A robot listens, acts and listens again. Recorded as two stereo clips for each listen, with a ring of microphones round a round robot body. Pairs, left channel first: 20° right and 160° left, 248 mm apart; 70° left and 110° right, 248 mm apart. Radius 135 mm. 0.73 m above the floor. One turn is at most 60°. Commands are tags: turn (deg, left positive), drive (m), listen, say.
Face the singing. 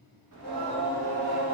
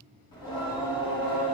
<turn deg="60"/>
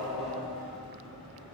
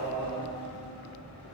<turn deg="60"/>
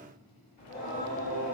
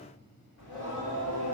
<turn deg="30"/>
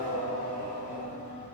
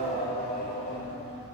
<turn deg="-10"/>
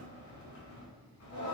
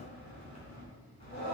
<say>Facing the singing.</say>